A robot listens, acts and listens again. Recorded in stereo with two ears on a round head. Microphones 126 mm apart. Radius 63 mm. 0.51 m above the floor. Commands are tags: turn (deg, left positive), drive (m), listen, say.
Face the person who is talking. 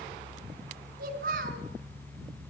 <turn deg="-70"/>
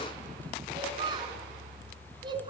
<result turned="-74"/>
<turn deg="-35"/>
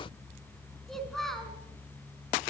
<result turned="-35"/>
<say>Facing the child speaking.</say>